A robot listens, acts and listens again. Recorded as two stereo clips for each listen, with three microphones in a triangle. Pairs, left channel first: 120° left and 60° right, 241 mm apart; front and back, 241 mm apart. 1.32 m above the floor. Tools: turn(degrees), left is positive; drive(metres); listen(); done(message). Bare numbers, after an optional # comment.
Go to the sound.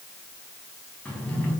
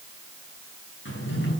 # The drawer: 35° left.
turn(35)
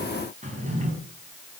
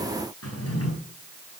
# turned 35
drive(1.0)
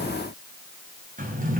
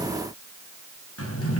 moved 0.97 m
drive(1.0)
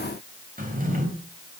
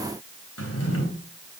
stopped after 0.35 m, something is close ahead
done("Blocked. The drawer is further on, straight ahead.")